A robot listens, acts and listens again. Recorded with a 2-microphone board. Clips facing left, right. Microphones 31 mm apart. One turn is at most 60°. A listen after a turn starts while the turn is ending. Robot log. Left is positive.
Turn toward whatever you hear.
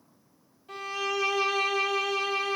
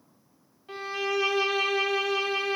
note: The violin: about 25° right or 155° right.
cmd yaw -25
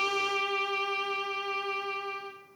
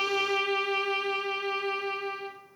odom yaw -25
note: So it is at 125° right.
cmd yaw -60
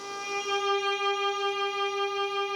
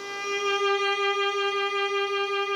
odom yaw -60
note: The violin is now 90° right.
cmd yaw -60
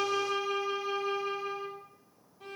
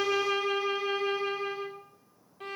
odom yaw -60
note: The violin is now 60° right.
cmd yaw -60
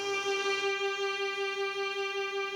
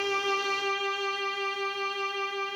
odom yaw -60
end: Found it: a violin, straight ahead, 1 to 2 m away.